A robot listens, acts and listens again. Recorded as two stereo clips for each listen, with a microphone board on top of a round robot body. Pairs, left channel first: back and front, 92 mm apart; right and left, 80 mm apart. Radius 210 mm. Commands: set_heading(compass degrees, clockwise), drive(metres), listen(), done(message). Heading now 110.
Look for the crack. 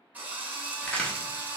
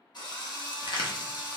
set_heading(210)
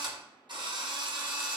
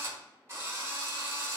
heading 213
done("Facing where the crack came from. I can't hear it now.")